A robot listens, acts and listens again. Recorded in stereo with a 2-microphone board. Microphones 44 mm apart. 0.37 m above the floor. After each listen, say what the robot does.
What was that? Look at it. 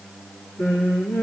Turn 90° left.
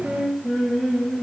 Facing the singing.